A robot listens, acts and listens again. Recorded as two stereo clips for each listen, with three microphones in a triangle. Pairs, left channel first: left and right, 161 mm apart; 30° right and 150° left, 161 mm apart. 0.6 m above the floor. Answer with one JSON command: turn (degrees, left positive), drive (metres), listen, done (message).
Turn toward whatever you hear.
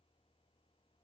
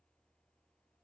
{"listen": true}
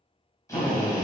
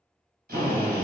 {"turn": 160}
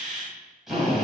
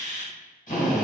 {"done": "Found it: a drill, straight ahead."}